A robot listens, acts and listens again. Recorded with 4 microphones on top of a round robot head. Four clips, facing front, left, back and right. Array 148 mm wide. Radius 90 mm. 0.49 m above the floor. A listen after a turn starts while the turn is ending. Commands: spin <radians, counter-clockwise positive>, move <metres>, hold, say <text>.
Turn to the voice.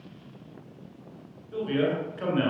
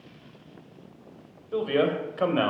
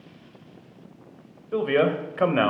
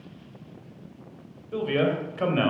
spin 2.79
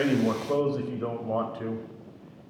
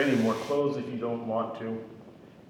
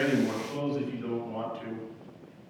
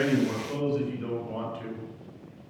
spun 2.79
spin 0.70
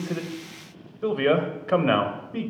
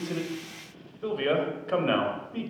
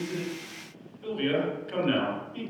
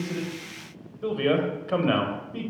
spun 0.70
say Facing the man speaking, 2 to 4 m away.